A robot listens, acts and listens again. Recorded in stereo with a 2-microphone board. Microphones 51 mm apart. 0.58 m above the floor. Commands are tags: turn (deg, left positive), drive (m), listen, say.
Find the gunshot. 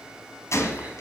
<turn deg="70"/>
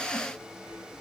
<listen/>
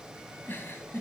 <say>I heard a gunshot, but can't make it out now. It was about straight ahead or 40° left.</say>